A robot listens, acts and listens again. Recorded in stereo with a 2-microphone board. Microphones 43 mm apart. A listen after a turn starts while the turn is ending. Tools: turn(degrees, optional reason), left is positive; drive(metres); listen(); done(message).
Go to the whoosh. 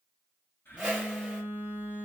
turn(degrees=-20, reason="The whoosh: about 20° right or 160° right.")
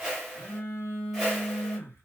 drive(metres=1.0)
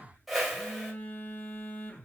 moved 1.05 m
drive(metres=1.0)
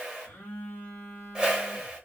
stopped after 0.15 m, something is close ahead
turn(degrees=-15, reason="The whoosh is now 15° right.")
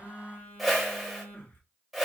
done("I am next to the whoosh.")